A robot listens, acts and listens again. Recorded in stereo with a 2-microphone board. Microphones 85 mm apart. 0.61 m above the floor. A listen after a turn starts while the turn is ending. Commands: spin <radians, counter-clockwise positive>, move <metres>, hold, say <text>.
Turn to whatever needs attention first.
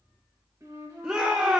spin -0.52
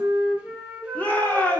spin 0.35
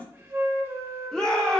say Found it: a shout, straight ahead, under 1 m away.